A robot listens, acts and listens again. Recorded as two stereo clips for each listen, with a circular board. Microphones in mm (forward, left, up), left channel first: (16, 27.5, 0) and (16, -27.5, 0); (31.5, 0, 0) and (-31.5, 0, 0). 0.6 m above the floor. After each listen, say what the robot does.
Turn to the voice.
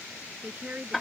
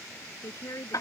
Turn 30° right.
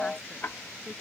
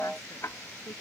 Keep listening.
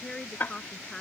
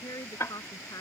Turn 10° left.
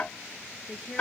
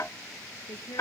Found it: a woman speaking, straight ahead.